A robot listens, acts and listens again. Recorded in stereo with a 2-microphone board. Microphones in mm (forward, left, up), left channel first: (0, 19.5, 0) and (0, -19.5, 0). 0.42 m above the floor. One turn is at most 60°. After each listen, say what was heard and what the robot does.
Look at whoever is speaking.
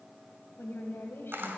The woman speaking: about 65° left or 115° left. Turn 60° left.
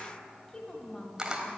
So it is at 20° left. Turn 20° left.
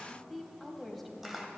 Found it: a woman speaking, straight ahead, 1 to 2 m away.